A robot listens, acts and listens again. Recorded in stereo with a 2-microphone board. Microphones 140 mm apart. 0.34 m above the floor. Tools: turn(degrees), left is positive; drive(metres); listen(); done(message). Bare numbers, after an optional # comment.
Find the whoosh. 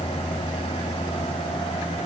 listen()
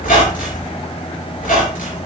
listen()
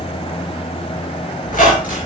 done("I can't make out a whoosh, only a squeak.")